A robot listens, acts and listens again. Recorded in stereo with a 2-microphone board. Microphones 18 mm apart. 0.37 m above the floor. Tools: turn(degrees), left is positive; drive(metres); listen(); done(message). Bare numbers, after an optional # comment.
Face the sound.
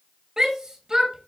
# The shout: about 35° right or 145° right.
turn(-35)
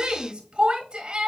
# So it is at 105° right.
turn(-105)
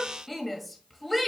# The shout is now 10° left.
turn(10)
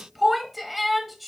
done("Facing the shout, 1 to 2 m away.")